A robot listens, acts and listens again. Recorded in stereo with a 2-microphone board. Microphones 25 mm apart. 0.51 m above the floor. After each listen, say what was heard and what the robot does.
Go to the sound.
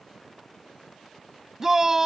The shout: about 15° right or 165° right. Turn 15° right.
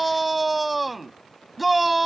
Drive 1.0 m forward.
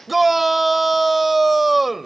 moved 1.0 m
Drive 1.0 m forward.
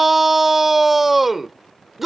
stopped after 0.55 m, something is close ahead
The shout is now 10° right. Turn 10° right.
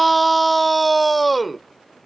I am next to the shout.